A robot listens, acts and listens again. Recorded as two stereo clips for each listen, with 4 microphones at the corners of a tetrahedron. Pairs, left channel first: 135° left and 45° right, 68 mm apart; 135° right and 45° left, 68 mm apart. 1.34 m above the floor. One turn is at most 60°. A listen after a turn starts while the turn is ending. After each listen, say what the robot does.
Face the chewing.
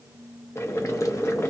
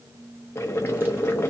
Keep listening.
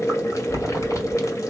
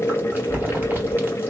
Turn 60° left.
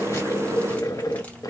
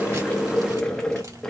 Turn 40° left.
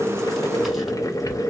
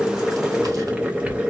Keep listening.
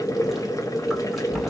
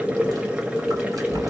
Turn 35° left.
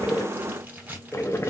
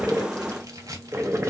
Turn 15° left.
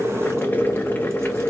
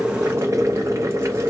Keep listening.
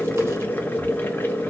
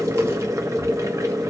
Keep listening.
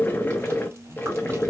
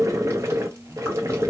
Facing the chewing.